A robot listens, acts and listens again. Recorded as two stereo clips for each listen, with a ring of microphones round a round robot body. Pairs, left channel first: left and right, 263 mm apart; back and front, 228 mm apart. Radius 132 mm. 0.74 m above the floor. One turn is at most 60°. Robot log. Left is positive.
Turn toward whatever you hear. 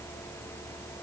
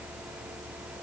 cmd idle
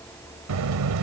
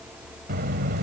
note: The buzzer: 60° right.
cmd yaw -60
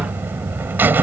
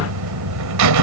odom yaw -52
end: Found it: a buzzer, straight ahead.